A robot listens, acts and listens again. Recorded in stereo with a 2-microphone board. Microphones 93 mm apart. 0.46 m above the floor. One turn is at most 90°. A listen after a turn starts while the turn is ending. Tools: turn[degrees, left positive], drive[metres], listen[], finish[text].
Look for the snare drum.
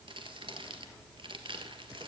Action: listen[]
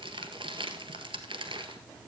Action: listen[]
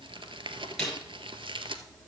Action: turn[30]
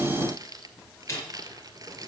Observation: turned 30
Thought: So it is at 145° left.
Action: turn[90]
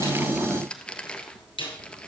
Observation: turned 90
Thought: The snare drum is now 90° left.
Action: turn[90]
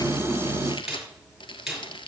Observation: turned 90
Action: finish[Found it: a snare drum, straight ahead, over 4 m away.]